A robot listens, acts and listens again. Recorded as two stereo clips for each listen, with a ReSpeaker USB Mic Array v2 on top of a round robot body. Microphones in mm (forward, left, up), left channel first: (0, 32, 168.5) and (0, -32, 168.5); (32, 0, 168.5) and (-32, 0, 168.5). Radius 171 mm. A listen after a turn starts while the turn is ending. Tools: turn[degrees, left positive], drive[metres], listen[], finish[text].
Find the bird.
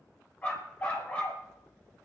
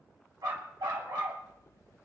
Action: listen[]
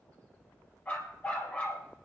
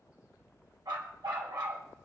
Action: listen[]
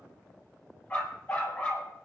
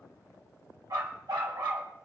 Action: finish[I can't make out a bird to turn to.]